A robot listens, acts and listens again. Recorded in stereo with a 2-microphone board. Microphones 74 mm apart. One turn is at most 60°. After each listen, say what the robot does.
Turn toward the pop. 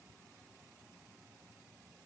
Keep listening.
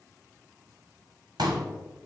Turn 60° right.
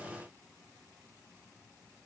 Turn 30° right.
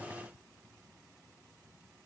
Facing where the pop came from. I can't hear it now.